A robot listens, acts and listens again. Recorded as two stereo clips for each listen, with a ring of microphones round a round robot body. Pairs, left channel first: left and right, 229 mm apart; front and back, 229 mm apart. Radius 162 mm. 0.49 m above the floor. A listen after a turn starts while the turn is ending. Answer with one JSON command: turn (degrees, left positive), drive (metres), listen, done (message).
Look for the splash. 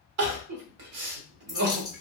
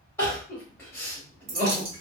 {"turn": -165}
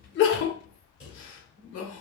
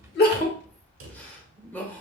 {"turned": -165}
{"done": "I heard a splash from this way, but can't make it out now."}